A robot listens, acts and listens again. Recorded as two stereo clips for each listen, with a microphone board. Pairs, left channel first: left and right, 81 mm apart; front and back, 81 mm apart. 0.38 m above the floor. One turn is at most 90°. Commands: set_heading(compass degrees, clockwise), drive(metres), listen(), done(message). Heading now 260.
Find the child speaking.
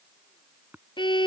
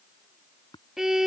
listen()
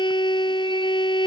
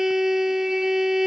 listen()
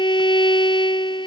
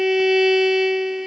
done("I can't make out a child speaking, only a violin and tapping.")